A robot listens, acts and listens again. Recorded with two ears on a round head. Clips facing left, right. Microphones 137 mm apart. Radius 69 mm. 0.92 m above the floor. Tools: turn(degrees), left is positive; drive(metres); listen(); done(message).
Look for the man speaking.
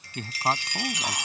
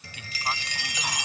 turn(degrees=35)
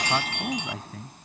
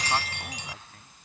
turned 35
turn(degrees=115)
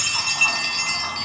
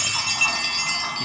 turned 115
listen()
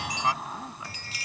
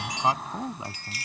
turn(degrees=-20)
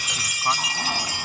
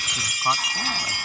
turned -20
listen()
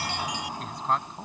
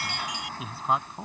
done("Found it: a man speaking, straight ahead.")